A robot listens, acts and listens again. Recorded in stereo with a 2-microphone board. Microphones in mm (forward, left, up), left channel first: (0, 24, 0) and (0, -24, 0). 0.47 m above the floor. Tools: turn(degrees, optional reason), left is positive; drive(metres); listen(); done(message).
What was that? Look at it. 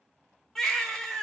turn(degrees=30)
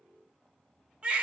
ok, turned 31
turn(degrees=-25, reason="So it is at 25° right.")
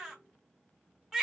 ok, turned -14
turn(degrees=-10, reason="The baby crying is now 10° right.")
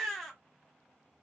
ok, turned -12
done("Found it: a baby crying, straight ahead, 1 to 2 m away.")